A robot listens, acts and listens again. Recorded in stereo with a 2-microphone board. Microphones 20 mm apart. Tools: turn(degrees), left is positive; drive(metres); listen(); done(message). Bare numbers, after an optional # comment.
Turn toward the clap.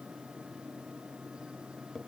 listen()
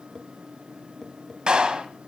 # The clap: about 45° right or 135° right.
turn(-45)
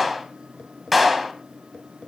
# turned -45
done("Facing the clap, 2 to 4 m away.")